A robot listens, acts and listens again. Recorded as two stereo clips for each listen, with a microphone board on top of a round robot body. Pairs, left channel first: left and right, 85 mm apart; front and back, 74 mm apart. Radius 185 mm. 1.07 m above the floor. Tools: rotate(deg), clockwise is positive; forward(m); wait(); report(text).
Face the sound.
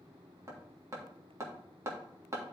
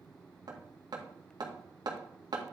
rotate(150)
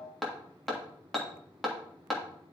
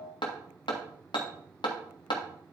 report("Found it: hammering, straight ahead, 1 to 2 m away.")